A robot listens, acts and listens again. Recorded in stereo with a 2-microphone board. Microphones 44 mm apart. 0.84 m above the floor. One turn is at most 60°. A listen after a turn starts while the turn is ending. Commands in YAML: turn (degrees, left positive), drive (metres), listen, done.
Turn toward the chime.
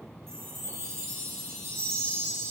turn: -60
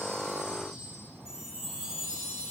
turn: -20
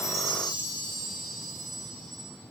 done: "Found it: a chime, straight ahead, over 4 m away."